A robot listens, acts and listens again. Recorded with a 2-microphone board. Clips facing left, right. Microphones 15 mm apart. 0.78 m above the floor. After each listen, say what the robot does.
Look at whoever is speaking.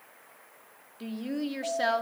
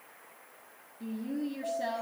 Turn 60° left.
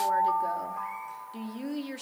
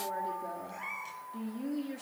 Turn 40° left.
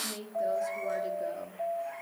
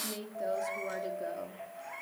Found it: a woman speaking, straight ahead.